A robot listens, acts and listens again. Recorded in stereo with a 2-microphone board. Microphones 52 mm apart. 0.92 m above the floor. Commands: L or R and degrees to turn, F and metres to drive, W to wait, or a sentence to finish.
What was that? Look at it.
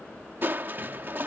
R40
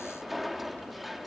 Found it: crushing, straight ahead.